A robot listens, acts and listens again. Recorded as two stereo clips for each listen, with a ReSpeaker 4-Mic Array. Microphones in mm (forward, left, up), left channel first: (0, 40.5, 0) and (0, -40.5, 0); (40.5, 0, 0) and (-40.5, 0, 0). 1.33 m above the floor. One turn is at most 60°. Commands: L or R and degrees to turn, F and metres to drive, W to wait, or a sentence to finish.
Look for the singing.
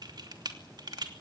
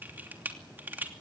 W
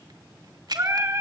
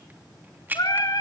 R35
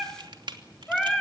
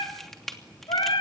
Facing the singing.